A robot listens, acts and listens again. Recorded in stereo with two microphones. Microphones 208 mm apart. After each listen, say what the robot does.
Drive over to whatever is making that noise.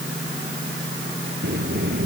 Turn 55° right.
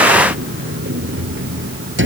Turn 70° right.
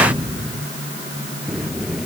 Drive 1.0 m forward.
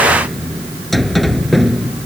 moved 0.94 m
Drive 1.0 m forward.
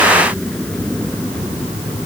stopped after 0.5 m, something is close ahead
Blocked. The sliding door is further on, straight ahead.